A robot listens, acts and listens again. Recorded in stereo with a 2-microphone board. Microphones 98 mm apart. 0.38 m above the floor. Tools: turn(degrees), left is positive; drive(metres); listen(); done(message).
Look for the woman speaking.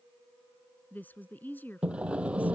turn(degrees=20)
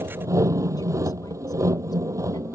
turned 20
listen()
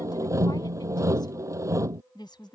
turn(degrees=130)
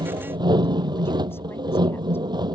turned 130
listen()
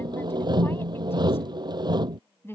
turn(degrees=25)
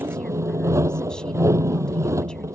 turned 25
listen()
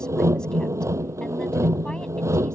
listen()
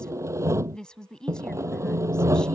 turn(degrees=10)
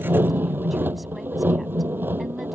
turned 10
listen()
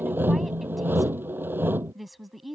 done("Found it: a woman speaking, straight ahead.")